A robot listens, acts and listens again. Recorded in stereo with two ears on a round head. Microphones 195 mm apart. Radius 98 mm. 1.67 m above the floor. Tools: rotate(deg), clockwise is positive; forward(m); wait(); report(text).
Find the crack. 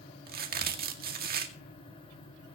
rotate(45)
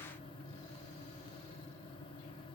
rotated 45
wait()
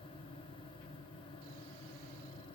report("I heard a crack, but can't make it out now. It was about straight ahead or 90° right.")